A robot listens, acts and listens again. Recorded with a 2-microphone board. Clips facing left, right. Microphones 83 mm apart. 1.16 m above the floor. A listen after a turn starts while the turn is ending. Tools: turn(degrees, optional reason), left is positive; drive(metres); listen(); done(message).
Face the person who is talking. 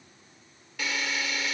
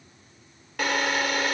listen()
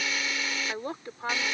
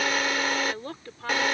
turn(degrees=20, reason="The woman speaking: about 20° left or 160° left.")
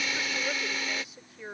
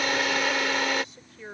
turn(degrees=30)
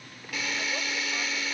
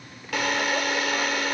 listen()
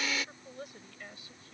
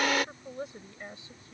turn(degrees=-25, reason="So it is at 25° right.")
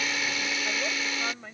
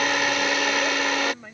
done("Found it: a woman speaking, straight ahead.")